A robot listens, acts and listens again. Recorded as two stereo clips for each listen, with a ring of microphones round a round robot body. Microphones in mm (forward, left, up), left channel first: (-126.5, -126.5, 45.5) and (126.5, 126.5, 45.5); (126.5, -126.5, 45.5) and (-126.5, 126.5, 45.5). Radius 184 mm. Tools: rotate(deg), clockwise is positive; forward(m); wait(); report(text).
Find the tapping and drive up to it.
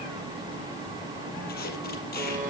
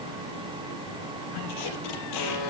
wait()
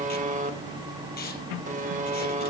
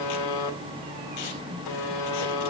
wait()
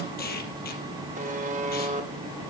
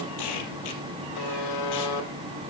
report("I can't make out tapping, only a buzzer.")